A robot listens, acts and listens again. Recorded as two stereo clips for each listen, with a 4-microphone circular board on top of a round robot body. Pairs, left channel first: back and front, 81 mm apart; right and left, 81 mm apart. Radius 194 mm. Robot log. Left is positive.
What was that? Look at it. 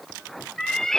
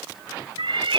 note: The cat meowing: 100° left.
cmd yaw +100
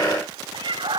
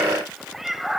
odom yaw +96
end: Found it: a cat meowing, straight ahead, 1 to 2 m away.